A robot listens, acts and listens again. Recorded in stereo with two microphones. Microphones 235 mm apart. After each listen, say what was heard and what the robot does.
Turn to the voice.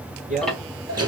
The man speaking: about 35° right or 145° right. Turn 35° right.
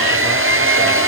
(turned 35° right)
Keep listening.
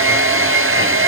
Keep listening.
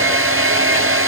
I heard a man speaking, but can't make it out now. It was about straight ahead or 110° right.